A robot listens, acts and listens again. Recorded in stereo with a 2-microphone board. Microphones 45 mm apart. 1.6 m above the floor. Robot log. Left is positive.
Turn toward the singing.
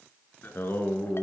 note: The singing: about 50° left or 130° left.
cmd yaw +50
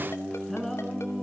note: So it is at 10° left.
cmd yaw +10
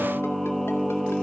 end: Facing the singing, 2 to 4 m away.